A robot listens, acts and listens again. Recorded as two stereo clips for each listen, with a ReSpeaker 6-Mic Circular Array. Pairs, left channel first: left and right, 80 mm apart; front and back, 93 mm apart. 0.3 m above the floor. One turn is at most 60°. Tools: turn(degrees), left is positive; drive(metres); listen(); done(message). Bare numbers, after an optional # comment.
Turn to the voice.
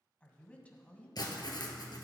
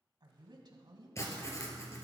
# The woman speaking: 160° left.
turn(60)
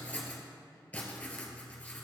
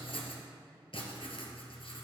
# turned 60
# Nothing new. It was at 100° left.
turn(60)
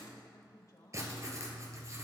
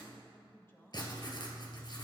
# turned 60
# The woman speaking is now 60° left.
turn(60)
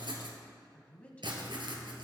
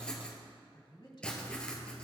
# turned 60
# The woman speaking is now 20° left.
turn(20)
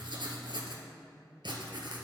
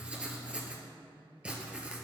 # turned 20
done("Found it: a woman speaking, straight ahead, 1 to 2 m away.")